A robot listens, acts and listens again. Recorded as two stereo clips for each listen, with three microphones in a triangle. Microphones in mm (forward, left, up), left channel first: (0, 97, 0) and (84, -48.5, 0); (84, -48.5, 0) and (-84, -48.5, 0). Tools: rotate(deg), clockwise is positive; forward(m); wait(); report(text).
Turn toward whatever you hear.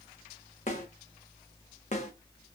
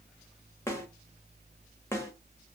rotate(-75)
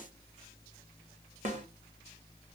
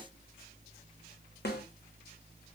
rotate(15)
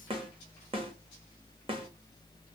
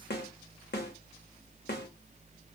report("Facing the snare drum, under 1 m away.")